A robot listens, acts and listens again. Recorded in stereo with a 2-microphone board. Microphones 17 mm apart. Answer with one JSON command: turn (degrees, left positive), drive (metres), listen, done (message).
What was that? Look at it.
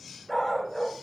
{"turn": 20}
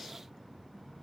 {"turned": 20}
{"listen": true}
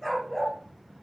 {"turn": 30}
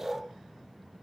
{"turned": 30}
{"turn": -30}
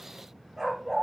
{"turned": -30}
{"turn": -15}
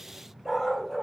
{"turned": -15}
{"done": "Facing the dog barking."}